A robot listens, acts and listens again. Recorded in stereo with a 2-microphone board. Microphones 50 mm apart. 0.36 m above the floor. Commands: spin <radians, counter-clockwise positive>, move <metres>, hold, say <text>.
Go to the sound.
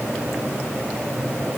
hold
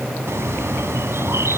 spin -1.13
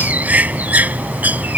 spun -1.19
spin -0.61
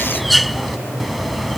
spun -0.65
move 1.0
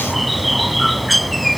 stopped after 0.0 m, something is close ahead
say Blocked. The bird is further on, straight ahead.